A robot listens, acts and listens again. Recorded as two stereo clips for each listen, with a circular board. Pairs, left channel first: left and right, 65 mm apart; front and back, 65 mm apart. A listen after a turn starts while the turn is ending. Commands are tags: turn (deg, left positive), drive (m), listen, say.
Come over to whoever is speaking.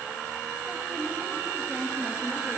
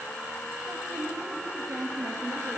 <turn deg="180"/>
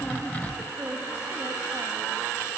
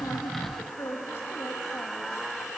<turn deg="-45"/>
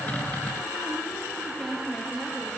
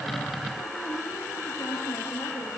<drive m="1.0"/>
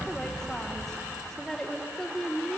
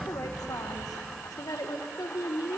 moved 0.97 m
<turn deg="10"/>
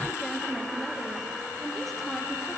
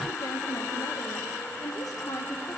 <drive m="1.0"/>
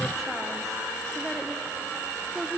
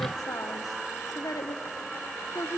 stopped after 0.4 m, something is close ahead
<say>Arrived at the woman speaking, straight ahead.</say>